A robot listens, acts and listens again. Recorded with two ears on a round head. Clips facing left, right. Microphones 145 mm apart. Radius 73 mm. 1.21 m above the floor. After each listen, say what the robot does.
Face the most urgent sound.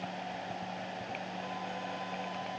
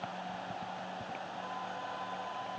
Keep listening.
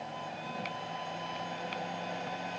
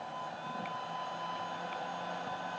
Keep listening.
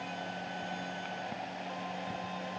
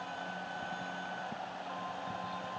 I can't make out anything urgent.